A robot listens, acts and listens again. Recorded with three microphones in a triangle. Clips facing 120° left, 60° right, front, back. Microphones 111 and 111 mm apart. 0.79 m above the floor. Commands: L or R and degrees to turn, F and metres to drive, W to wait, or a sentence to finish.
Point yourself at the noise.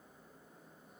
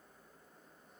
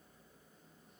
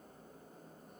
W
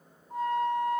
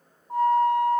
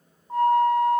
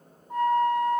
R55
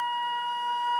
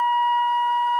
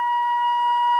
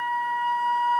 Found it: a flute, straight ahead.